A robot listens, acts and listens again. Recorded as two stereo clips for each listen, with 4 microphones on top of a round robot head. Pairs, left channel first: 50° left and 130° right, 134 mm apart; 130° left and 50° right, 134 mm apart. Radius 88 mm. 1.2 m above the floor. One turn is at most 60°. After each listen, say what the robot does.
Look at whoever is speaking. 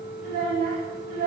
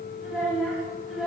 Turn 60° right.
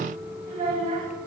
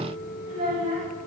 Turn 60° right.
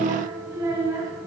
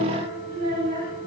Turn 60° right.
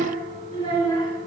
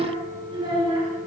Found it: a child speaking, straight ahead, 2 to 4 m away.